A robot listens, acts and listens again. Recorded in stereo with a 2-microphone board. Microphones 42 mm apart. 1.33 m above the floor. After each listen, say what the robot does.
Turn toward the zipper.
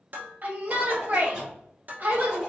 Turn 30° right.
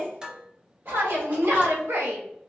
Turn 140° right.
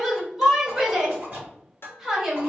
Turn 45° right.
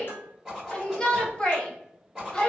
Turn 15° right.
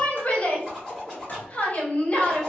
Found it: a zipper, straight ahead.